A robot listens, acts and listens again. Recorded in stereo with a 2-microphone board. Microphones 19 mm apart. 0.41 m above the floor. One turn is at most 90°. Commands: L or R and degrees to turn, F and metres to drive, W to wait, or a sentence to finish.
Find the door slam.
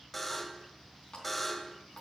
W
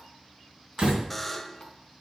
R50
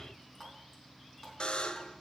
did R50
W
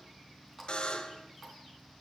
I heard a door slam, but can't make it out now. It was about straight ahead or 80° right.